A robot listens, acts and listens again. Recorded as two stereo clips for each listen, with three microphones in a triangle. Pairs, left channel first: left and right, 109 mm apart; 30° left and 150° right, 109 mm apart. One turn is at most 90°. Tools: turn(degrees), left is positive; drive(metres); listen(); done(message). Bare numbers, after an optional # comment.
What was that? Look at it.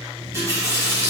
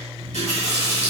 # The running tap: 155° right.
turn(-90)
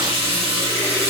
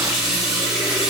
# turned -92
# The running tap is now 65° right.
turn(-65)
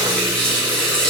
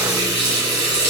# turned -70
done("Found it: a running tap, straight ahead.")